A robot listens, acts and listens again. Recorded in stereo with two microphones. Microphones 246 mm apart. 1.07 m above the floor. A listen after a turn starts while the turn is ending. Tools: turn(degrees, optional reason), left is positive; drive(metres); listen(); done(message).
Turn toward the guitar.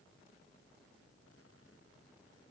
listen()
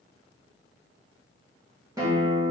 turn(degrees=-30)
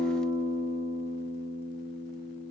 turn(degrees=-135, reason="So it is at 135° right.")
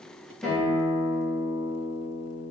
turn(degrees=10, reason="The guitar is now 10° left.")
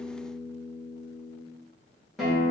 done("Facing the guitar, under 1 m away.")